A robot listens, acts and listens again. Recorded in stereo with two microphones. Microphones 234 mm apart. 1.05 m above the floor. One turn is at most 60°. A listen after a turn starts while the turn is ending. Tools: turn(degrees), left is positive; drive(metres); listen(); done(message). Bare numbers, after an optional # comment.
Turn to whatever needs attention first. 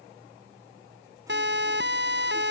# The siren: about 50° right or 130° right.
turn(-50)
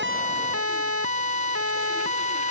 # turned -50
# So it is at 80° right.
turn(-60)
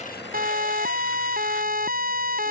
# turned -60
# The siren is now 40° right.
turn(-40)
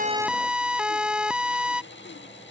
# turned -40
done("Facing the siren.")